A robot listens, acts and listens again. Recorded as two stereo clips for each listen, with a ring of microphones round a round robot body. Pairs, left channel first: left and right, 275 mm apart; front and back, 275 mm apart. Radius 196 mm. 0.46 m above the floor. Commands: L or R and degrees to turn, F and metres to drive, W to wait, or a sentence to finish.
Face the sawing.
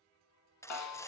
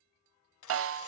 L10
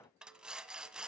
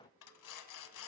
Found it: sawing, straight ahead, 1 to 2 m away.